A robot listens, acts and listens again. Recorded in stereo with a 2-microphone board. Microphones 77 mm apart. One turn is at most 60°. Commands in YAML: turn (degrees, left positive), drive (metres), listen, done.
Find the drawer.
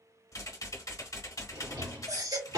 turn: -60
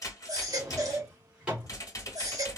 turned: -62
turn: -15
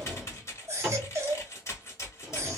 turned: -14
done: "Facing the drawer."